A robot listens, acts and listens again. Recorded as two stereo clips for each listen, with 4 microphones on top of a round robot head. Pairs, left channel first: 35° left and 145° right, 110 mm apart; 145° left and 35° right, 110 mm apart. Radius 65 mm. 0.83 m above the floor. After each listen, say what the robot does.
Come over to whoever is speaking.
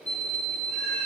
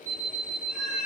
Keep listening.
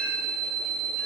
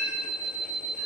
Keep listening.
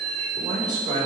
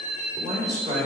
Turn 95° right.
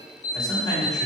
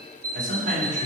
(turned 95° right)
Turn 25° right.
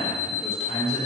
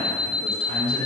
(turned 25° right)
Drive 1.0 m forward.
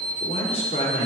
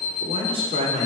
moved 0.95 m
Drive 1.0 m forward.
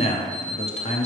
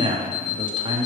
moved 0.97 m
Turn 10° left.
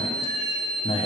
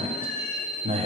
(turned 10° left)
Drive 1.0 m forward.
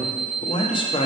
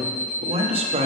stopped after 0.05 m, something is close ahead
I am next to the man speaking.